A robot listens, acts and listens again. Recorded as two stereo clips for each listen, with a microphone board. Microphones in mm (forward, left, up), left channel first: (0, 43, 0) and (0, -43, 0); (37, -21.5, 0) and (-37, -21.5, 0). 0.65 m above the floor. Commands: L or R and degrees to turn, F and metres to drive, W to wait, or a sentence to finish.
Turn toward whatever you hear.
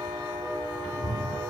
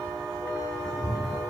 R140
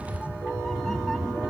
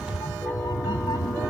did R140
Found it: a cat meowing, straight ahead.